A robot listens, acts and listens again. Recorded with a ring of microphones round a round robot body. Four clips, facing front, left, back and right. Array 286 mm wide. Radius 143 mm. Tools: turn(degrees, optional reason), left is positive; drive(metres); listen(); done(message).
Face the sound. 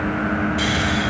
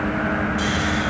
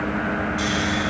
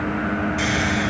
turn(degrees=-60, reason="The snoring: 60° right.")
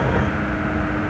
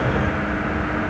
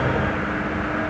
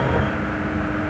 listen()
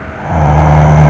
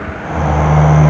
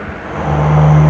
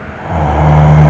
turn(degrees=-30, reason="The snoring is now 30° right.")
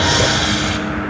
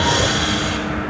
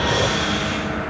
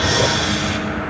done("Found it: snoring, straight ahead.")